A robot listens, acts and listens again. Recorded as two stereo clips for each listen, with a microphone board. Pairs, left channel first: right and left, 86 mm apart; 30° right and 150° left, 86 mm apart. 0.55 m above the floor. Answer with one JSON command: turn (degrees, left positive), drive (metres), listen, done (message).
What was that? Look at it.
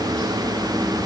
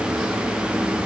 {"listen": true}
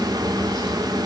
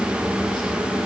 {"listen": true}
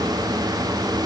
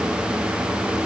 {"done": "I can't make out anything to turn to."}